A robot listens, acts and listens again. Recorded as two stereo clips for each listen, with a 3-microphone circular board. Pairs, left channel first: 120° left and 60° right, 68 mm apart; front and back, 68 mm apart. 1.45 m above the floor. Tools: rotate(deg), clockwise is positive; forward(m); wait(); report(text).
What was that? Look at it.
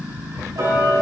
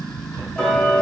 rotate(75)
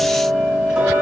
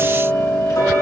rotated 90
rotate(-15)
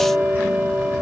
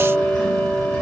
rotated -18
report("Found it: ticking, straight ahead, 1 to 2 m away.")